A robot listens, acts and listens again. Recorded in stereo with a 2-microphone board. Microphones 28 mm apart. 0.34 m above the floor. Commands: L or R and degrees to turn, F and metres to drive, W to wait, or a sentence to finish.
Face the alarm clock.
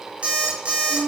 R40
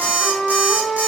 R95
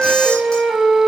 W
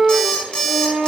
L30
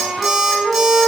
W
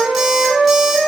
W
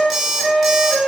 Facing the alarm clock.